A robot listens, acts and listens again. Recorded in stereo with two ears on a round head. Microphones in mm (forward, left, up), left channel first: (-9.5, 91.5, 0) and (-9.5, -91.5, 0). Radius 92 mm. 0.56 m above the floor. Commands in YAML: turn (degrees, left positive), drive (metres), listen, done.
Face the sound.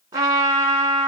turn: -20
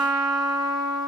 done: "Facing the trumpet."